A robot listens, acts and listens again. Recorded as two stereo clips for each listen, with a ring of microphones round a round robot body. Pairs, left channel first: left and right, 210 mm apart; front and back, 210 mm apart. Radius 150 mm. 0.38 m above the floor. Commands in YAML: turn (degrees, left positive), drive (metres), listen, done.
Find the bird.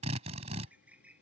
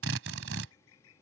done: "Facing the bird."